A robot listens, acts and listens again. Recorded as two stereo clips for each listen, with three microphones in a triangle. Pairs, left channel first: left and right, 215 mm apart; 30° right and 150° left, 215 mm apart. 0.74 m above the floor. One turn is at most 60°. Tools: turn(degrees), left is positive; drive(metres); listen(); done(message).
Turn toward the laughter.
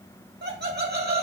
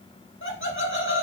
turn(degrees=-50)
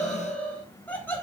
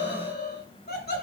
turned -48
turn(degrees=10)
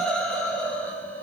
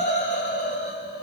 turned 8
turn(degrees=10)
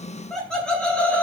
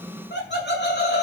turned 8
done("Facing the laughter.")